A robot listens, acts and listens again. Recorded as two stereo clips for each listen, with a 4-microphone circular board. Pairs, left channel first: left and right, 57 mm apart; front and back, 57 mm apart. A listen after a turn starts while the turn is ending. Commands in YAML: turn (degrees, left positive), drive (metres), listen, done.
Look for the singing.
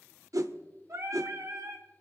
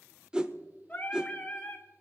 turn: -65
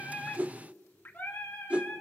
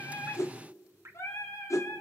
turn: 30
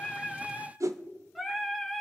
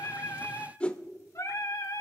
done: "Found it: singing, straight ahead."